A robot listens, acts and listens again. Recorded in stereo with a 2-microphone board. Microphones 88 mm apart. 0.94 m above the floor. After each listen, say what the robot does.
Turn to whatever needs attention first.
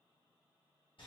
Keep listening.
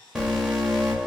Turn 30° right.
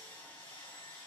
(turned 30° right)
Keep listening.
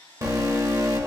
Turn 140° right.
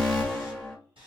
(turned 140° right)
Turn 10° left.
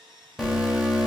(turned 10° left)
Facing the alarm, 1 to 2 m away.